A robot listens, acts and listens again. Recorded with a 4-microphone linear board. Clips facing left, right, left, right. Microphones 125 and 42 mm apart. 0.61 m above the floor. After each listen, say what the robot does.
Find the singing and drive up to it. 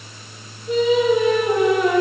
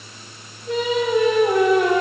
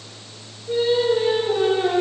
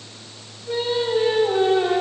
Turn 90° right.
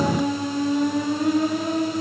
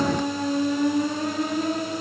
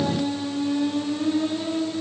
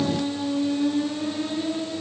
Drive 1.0 m forward.
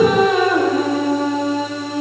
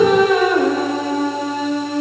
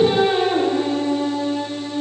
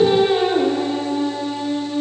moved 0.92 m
Drive 1.0 m forward.
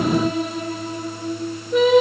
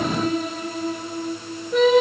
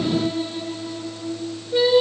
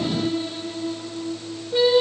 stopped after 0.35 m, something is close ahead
Arrived at the singing, straight ahead.